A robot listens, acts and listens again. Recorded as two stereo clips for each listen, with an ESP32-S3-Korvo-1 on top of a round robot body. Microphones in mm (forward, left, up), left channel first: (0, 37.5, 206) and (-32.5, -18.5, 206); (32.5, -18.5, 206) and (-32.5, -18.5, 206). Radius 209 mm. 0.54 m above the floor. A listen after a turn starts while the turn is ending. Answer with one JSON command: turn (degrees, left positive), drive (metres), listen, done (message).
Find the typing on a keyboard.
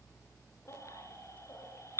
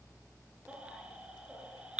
{"listen": true}
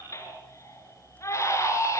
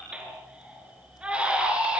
{"listen": true}
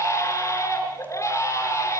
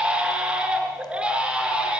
{"done": "I can't make out typing on a keyboard, only a baby crying."}